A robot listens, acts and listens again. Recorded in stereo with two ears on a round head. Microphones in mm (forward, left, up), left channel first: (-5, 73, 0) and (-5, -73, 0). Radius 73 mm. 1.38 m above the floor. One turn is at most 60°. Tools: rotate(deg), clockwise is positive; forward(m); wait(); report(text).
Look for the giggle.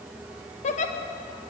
rotate(-45)
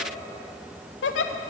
rotate(-60)
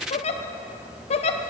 rotate(-40)
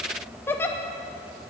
rotate(-15)
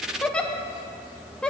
report("Found it: a giggle, straight ahead, under 1 m away.")